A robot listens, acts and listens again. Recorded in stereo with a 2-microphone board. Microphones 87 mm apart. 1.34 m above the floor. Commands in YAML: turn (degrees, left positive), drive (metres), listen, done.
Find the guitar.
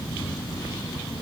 listen: true
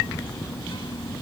listen: true
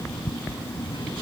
done: "I can't make out a guitar to turn to."